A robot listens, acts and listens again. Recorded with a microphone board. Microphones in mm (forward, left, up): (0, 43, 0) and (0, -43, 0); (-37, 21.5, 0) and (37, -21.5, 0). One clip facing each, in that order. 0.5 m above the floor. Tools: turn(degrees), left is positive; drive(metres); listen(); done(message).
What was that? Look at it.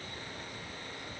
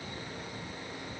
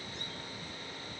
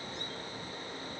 listen()
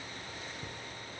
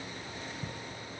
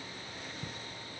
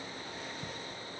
listen()
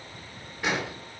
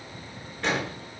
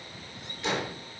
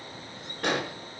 done("Facing the explosion, 2 to 4 m away.")